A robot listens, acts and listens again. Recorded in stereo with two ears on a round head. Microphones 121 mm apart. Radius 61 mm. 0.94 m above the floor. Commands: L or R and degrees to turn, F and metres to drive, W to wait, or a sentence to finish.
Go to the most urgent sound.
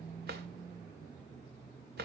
W
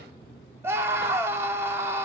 R20
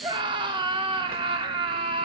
R140
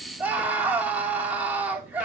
R10
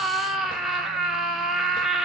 F1.0
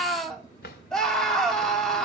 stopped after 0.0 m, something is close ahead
Blocked. The scream is further on, straight ahead.